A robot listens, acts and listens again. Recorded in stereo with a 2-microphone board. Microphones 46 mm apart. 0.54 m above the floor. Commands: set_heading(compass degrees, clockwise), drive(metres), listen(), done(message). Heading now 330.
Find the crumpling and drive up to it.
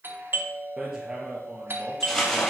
set_heading(300)
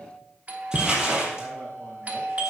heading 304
set_heading(319)
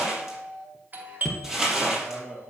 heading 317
drive(1.0)
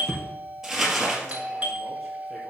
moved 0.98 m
drive(1.0)
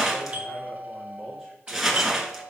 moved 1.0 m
drive(1.0)
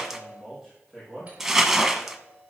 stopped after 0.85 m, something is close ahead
done("I am next to the crumpling.")